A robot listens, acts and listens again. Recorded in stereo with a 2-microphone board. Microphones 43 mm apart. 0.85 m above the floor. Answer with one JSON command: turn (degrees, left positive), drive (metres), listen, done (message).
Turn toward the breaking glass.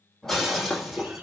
{"turn": 30}
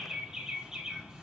{"listen": true}
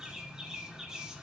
{"done": "I heard breaking glass, but can't make it out now. It was about 20° right or 140° left."}